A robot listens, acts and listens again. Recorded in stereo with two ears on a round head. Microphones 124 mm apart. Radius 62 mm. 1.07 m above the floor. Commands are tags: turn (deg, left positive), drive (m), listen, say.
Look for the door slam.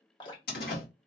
<turn deg="90"/>
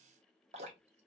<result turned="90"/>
<say>I heard a door slam from this way, but can't make it out now.</say>